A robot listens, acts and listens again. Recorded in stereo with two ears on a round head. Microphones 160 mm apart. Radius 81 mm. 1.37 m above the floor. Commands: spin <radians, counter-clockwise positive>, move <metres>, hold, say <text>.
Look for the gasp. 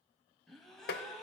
spin 0.52
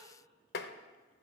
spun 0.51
hold
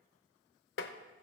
say I heard a gasp, but can't make it out now. It was about 25° right or 150° left.